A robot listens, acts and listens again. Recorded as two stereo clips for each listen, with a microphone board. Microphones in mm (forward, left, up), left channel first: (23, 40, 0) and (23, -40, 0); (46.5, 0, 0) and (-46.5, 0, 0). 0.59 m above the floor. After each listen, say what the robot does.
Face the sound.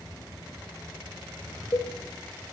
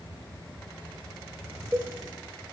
Turn 125° left.
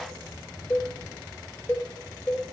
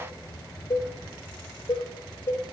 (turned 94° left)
Turn 30° left.
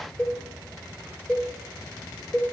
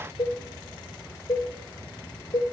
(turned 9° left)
Turn 20° left.
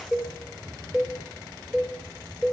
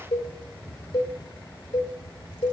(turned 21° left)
Facing the cowbell, 1 to 2 m away.